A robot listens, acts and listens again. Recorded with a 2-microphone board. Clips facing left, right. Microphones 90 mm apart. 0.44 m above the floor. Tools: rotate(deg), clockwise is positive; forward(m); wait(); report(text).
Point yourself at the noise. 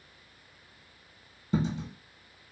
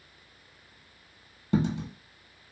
rotate(90)
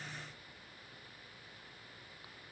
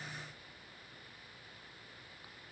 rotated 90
report("Facing where the dropped coin came from. I can't hear it now.")